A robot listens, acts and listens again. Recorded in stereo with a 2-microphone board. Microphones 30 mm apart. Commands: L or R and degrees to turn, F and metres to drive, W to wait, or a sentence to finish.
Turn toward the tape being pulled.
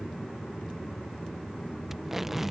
R30
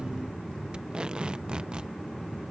R135
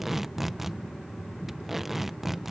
R10
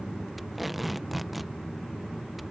Facing the tape being pulled.